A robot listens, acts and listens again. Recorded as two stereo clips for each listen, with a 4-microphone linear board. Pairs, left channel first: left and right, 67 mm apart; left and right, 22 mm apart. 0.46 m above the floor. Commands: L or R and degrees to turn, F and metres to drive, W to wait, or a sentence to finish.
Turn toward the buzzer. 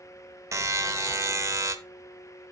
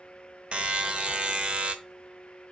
R50
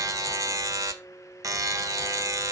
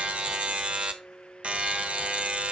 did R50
R70
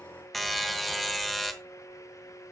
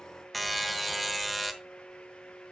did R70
Facing the buzzer, under 1 m away.